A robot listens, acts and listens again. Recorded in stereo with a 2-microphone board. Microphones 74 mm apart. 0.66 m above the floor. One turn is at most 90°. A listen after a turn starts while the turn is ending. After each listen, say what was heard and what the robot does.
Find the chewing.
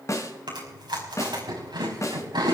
The chewing: about 75° right or 105° right. Turn 75° right.
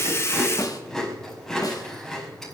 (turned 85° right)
Found it: chewing, straight ahead.